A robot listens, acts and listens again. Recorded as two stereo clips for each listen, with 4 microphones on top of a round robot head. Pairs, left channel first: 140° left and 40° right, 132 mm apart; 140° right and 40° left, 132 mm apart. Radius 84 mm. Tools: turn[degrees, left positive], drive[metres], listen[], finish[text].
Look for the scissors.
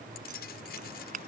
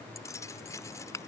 Thought: The scissors: 70° right.
Action: turn[-70]
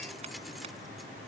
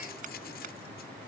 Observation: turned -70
Action: listen[]
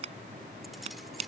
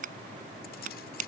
Thought: The scissors is now 10° left.
Action: turn[10]
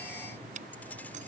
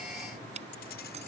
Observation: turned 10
Action: finish[Facing the scissors.]